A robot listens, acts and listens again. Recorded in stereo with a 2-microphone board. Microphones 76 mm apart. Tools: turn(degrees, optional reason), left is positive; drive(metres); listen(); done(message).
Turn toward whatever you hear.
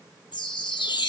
turn(degrees=90)
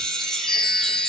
done("Found it: a chime, straight ahead.")